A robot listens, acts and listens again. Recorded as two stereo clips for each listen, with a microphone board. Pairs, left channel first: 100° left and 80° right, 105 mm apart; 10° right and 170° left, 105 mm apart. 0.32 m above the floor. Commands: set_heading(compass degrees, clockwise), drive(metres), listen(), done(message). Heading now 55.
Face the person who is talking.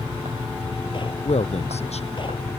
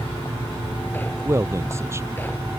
set_heading(310)
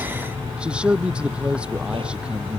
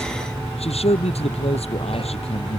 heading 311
done("Facing the man speaking.")